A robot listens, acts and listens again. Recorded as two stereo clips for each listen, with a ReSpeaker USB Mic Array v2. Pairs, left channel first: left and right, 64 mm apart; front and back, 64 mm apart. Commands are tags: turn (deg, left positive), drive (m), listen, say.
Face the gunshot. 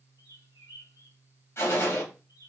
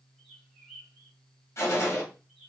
<turn deg="45"/>
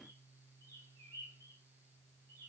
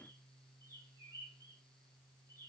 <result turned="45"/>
<say>I heard a gunshot from this way, but can't make it out now.</say>